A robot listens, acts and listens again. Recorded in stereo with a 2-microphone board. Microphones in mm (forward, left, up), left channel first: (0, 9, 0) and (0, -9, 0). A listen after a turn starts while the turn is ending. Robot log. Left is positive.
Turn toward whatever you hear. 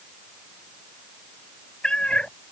note: The cat meowing: about 70° left or 110° left.
cmd yaw +70
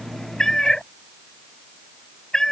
note: So it is at 35° left.
cmd yaw +35
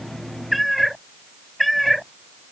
end: Facing the cat meowing.